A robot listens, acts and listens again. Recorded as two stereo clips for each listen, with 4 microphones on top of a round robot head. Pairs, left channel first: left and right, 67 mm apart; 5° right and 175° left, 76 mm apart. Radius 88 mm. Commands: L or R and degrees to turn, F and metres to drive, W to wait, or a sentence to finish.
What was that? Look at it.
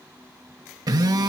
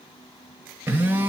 R115
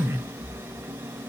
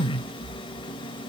R25
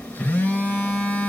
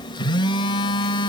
L15
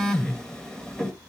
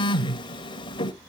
L10
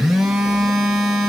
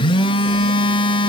Found it: a phone buzzing, straight ahead, 1 to 2 m away.